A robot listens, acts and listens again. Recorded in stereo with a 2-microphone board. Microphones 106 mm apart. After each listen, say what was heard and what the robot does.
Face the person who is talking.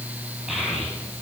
Turn 30° right.
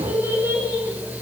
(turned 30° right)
So it is at 155° right. Turn 155° right.
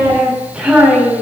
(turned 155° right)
The child speaking is now 15° right. Turn 15° right.
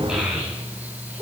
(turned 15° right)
The child speaking is now 15° right. Turn 15° right.
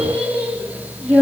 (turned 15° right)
Facing the child speaking.